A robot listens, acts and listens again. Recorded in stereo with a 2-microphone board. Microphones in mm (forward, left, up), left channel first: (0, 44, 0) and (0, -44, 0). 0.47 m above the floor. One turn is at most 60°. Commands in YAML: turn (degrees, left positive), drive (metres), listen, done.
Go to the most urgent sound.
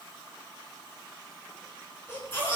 turn: 30
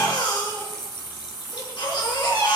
turn: 60
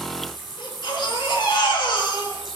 turn: 60
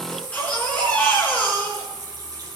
turn: 15
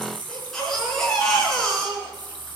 drive: 1.0
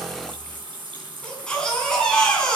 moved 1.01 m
turn: 10
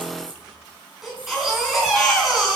drive: 1.0
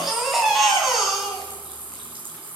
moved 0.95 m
drive: 1.0
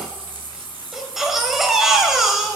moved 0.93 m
drive: 1.0
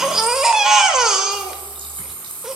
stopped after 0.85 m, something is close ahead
done: "Arrived at the baby crying, straight ahead."